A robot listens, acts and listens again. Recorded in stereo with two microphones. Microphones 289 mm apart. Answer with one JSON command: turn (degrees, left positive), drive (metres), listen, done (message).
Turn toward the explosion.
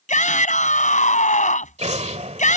{"turn": -25}
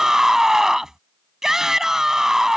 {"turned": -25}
{"listen": true}
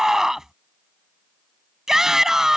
{"done": "I heard an explosion, but can't make it out now. It was about straight ahead or 130° right."}